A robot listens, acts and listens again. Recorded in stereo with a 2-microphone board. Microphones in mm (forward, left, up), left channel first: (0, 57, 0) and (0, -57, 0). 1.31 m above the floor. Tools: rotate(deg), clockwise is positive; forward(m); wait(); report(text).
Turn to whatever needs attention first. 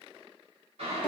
wait()
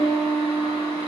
wait()
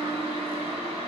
report("I can't make out anything urgent, only a piano and boiling.")